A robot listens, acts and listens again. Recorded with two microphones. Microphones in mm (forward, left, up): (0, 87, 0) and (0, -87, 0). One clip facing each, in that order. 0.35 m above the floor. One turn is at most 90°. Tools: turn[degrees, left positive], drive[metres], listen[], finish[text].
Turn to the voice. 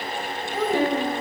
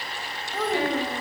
Action: turn[30]
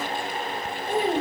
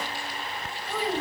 Thought: So it is at 140° left.
Action: turn[90]
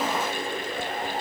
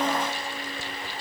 Thought: Nothing new. It was at 50° left.
Action: turn[50]
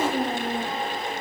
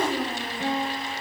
Thought: The child speaking is now 35° left.
Action: turn[35]
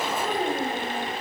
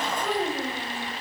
Thought: The child speaking is now 15° left.
Action: turn[15]
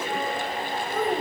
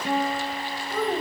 Thought: The child speaking is now 10° left.
Action: turn[10]
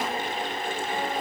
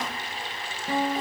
Action: listen[]
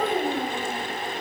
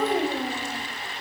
Action: finish[Found it: a child speaking, straight ahead, 1 to 2 m away.]